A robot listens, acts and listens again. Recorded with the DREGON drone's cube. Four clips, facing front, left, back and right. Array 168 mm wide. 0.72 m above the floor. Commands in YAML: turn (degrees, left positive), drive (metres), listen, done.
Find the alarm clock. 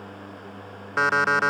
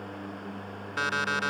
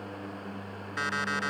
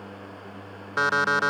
turn: -35
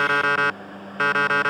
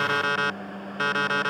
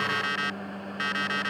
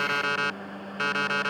turn: 10
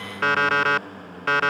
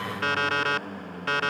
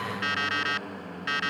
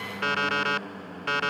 done: "Facing the alarm clock."